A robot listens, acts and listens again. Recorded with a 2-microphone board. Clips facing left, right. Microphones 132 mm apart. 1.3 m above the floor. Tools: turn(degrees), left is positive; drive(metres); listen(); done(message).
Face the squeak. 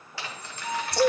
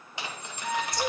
turn(degrees=30)
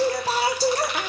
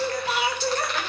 listen()
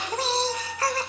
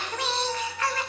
turn(degrees=110)
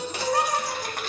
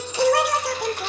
listen()
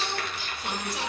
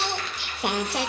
listen()
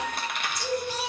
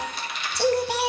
done("Facing where the squeak came from. I can't hear it now.")